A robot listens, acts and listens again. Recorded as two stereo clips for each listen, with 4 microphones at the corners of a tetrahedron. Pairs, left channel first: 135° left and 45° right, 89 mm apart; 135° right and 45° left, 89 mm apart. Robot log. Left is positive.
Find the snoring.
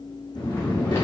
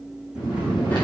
note: The snoring: 75° left.
cmd yaw +75
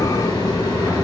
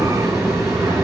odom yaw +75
cmd idle
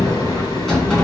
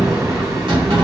cmd idle
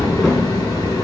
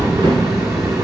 note: The snoring is now 10° left.
cmd yaw +10
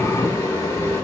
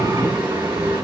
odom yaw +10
cmd idle
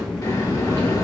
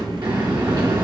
cmd idle
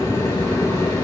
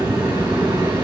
end: Facing where the snoring came from. I can't hear it now.